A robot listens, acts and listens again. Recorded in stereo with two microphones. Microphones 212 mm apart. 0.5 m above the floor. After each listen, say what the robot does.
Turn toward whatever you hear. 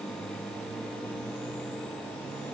Keep listening.
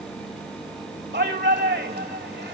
Turn 55° right.
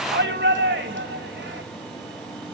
Turn 65° right.
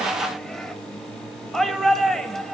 Facing the shout, 2 to 4 m away.